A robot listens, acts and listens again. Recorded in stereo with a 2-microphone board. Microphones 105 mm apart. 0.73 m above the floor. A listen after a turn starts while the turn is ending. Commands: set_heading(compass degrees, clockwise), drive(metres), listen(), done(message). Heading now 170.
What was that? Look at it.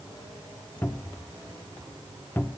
set_heading(155)
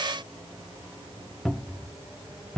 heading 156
done("Facing the cupboard door.")